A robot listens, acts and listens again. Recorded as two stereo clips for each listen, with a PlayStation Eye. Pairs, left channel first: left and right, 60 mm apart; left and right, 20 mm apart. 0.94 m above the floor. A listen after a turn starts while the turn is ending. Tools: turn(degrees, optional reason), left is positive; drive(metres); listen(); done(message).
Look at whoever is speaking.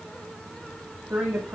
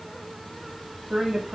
turn(degrees=-20, reason="The woman speaking: about 20° right or 160° right.")
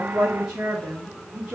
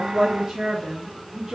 turn(degrees=-15, reason="The woman speaking: about 15° right or 165° right.")
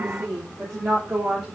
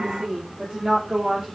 turn(degrees=-30)
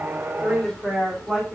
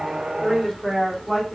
done("Facing the woman speaking, 2 to 4 m away.")